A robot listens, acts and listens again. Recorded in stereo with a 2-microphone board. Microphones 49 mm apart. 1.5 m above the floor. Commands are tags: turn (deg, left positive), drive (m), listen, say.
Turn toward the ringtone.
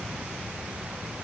<listen/>
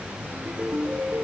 <turn deg="-45"/>
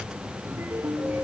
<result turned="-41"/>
<turn deg="-95"/>
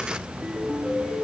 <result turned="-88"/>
<say>Facing the ringtone.</say>